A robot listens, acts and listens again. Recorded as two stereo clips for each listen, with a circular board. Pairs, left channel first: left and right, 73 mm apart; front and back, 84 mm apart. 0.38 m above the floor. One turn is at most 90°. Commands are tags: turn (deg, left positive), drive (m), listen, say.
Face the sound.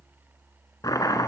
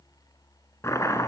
<turn deg="55"/>
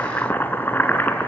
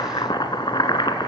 <turn deg="25"/>
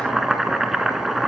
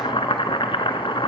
<say>Facing the chopping, 1 to 2 m away.</say>